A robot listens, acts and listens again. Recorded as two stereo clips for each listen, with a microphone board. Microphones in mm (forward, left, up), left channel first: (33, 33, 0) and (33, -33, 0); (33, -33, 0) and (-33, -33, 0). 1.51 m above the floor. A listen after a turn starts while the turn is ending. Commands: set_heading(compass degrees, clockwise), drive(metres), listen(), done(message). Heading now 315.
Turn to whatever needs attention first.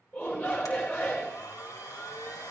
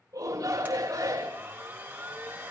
set_heading(165)
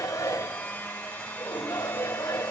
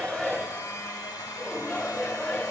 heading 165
set_heading(110)
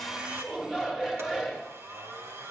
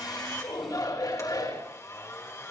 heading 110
set_heading(120)
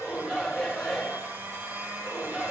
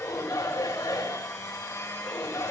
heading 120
done("Facing the shout.")